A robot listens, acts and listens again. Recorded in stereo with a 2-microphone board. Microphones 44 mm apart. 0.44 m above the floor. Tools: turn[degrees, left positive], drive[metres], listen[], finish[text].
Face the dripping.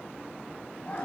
Action: listen[]
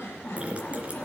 Thought: The dripping: about 25° right or 155° right.
Action: turn[-25]
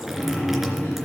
Action: finish[Facing the dripping.]